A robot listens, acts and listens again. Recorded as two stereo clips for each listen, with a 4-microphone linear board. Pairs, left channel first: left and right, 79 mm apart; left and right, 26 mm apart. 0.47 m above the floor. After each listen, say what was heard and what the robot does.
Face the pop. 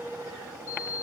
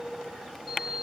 Keep listening.
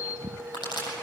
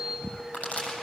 The pop: about 75° left or 105° left. Turn 75° left.
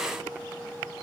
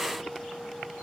Keep listening.
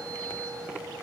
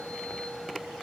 I heard a pop, but can't make it out now. It was about straight ahead or 30° left.